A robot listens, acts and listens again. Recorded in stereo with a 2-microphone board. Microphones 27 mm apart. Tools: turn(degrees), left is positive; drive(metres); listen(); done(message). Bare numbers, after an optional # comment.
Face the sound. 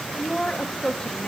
# The woman speaking: about 30° left or 150° left.
turn(30)
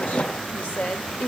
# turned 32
# So it is at 105° left.
turn(105)
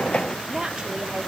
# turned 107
listen()
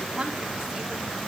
listen()
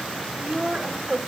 # The woman speaking is now 30° right.
turn(-30)
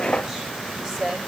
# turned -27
done("Facing the woman speaking, 2 to 4 m away.")